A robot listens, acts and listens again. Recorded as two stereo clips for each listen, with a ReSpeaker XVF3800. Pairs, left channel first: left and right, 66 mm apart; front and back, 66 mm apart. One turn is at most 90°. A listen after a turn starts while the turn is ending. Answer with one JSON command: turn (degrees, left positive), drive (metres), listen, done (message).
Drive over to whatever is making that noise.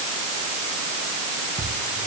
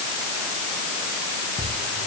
{"turn": -55}
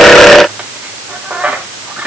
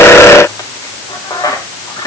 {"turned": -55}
{"turn": -20}
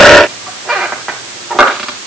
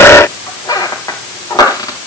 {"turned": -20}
{"drive": 1.0}
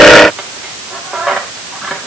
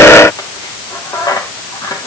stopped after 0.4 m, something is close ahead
{"done": "Something is in my way. I am facing the squeak but have not reached it."}